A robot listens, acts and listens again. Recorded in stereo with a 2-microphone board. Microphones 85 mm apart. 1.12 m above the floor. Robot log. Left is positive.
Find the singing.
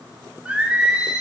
cmd yaw -30
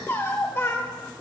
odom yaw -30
note: So it is at 30° left.
cmd yaw +30
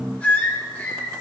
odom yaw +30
note: The singing is now 20° left.
cmd yaw +20
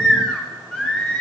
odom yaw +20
note: The singing is now 10° left.
cmd yaw +10
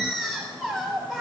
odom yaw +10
end: Found it: singing, straight ahead, over 4 m away.